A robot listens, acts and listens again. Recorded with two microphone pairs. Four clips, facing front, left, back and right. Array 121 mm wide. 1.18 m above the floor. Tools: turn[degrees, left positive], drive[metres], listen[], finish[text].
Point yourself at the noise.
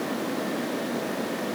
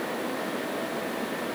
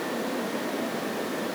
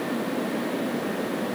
Action: listen[]
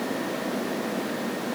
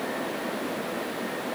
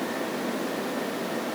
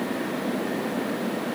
Action: listen[]
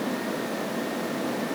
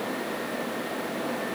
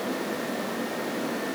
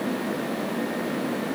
Action: finish[I can't make out anything.]